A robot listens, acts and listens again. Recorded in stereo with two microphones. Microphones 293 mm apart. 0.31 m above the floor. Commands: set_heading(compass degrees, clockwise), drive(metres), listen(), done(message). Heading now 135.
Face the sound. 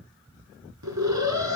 set_heading(210)
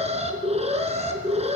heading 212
set_heading(232)
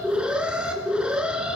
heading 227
done("Facing the alarm.")